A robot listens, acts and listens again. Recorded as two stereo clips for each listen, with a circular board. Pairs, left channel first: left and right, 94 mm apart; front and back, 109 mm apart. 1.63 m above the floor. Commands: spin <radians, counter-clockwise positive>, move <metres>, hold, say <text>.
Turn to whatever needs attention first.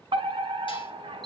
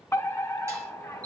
spin -1.13
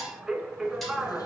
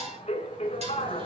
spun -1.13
say Found it: a fire alarm, straight ahead, 2 to 4 m away.